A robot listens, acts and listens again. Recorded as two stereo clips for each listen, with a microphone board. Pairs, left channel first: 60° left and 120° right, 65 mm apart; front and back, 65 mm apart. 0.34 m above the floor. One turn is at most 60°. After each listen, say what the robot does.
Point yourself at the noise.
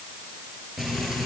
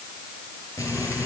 Turn 35° right.
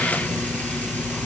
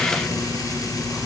Facing the frying.